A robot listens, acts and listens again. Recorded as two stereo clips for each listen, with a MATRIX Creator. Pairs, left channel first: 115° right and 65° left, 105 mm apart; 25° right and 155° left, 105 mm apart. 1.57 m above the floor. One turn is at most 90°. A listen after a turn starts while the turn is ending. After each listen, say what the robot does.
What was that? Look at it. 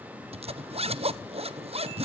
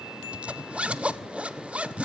Turn 80° left.
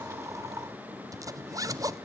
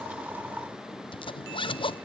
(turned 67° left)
Turn 10° left.
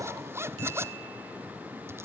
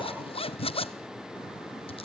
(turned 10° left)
Found it: a zipper, straight ahead, 1 to 2 m away.